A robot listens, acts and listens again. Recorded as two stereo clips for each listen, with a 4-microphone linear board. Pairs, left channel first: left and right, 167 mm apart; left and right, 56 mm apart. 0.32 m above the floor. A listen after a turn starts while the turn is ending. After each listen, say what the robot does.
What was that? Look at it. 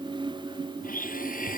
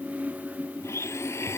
Turn 55° left.
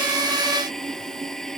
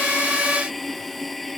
Found it: a blender, straight ahead.